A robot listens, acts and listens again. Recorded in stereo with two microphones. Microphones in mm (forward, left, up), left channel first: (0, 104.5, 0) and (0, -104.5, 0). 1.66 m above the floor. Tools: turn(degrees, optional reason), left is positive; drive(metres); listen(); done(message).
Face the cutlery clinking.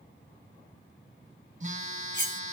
turn(degrees=55, reason="The cutlery clinking: about 55° left or 125° left.")
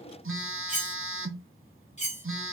turn(degrees=40, reason="So it is at 40° left.")
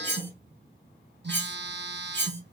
turn(degrees=10, reason="The cutlery clinking is now 10° left.")
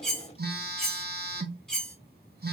done("Facing the cutlery clinking, 1 to 2 m away.")